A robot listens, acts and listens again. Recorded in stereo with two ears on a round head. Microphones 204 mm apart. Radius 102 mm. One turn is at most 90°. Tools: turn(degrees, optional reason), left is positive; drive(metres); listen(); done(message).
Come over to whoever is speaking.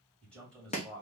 turn(degrees=30)
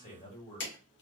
turn(degrees=90, reason="So it is at 145° left.")
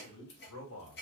turn(degrees=85, reason="The man speaking is now 85° left.")
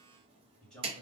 drive(metres=1.0)
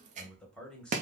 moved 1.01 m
drive(metres=1.0)
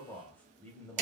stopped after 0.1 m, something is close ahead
turn(degrees=10, reason="The man speaking is now 10° left.")
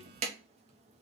listen()
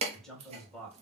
done("I am next to the man speaking.")